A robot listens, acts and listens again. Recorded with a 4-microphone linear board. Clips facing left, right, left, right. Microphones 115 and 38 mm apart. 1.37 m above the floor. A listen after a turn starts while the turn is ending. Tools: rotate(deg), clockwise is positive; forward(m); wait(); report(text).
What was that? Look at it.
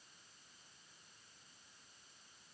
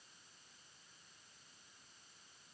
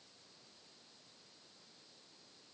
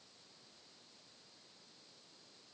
wait()
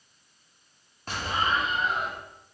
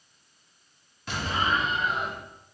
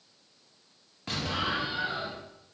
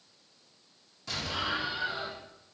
rotate(-40)
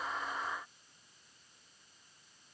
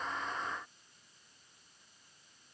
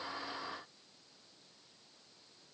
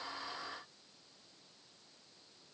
wait()
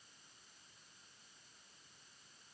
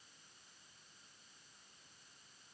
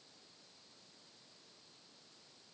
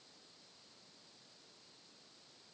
report("I heard an explosion, but can't make it out now. It was about straight ahead or 100° left.")